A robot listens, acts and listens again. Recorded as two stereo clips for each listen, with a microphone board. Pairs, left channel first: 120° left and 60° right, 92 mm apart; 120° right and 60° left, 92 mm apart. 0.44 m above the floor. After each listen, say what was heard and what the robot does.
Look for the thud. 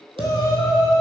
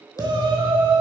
The thud: 65° right. Turn 65° right.
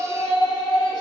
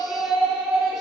Facing where the thud came from. I can't hear it now.